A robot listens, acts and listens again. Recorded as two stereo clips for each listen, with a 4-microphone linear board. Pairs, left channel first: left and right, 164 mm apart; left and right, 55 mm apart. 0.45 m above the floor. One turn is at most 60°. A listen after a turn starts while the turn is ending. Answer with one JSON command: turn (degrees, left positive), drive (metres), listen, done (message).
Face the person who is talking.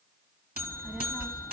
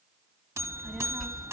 {"turn": -30}
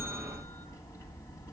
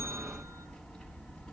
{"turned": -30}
{"turn": 20}
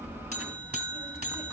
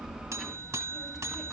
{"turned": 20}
{"done": "Facing the child speaking."}